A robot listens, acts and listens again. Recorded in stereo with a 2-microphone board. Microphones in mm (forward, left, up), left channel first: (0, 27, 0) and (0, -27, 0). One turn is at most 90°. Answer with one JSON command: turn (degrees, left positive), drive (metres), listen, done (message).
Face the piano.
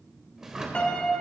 {"turn": 20}
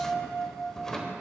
{"turn": 90}
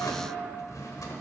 {"turn": 60}
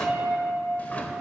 {"done": "Found it: a piano, straight ahead."}